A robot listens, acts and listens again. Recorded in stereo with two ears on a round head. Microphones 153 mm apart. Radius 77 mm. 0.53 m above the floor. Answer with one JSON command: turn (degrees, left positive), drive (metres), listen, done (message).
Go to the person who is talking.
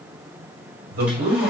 {"turn": -65}
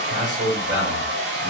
{"turn": -20}
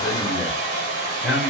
{"drive": 1.0}
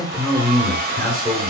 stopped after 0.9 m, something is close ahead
{"done": "Arrived at the man speaking, straight ahead."}